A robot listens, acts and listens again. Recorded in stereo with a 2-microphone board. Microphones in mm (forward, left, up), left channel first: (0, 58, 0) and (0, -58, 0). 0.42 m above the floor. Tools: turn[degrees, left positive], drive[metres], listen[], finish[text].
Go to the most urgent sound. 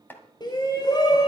Thought: The shout: about 40° left or 140° left.
Action: turn[40]
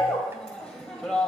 Thought: So it is at 10° left.
Action: turn[10]
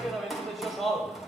Action: drive[1.0]
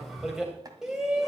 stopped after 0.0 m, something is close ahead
Action: finish[Something is in my way. I am facing the shout but have not reached it.]